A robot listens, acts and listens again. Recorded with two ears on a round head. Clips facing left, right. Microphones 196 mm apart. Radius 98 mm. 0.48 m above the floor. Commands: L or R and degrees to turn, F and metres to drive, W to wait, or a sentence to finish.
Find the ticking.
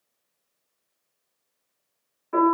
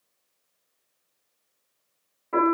W
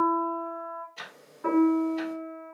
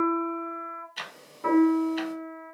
R90
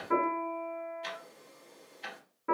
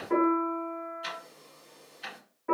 R10
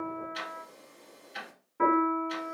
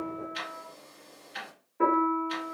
Facing the ticking, under 1 m away.